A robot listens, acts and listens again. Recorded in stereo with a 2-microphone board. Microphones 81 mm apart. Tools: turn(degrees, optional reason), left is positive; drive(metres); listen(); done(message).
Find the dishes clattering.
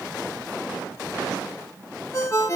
listen()
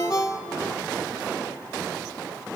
listen()
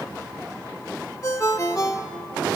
done("I can't make out dishes clattering to turn to.")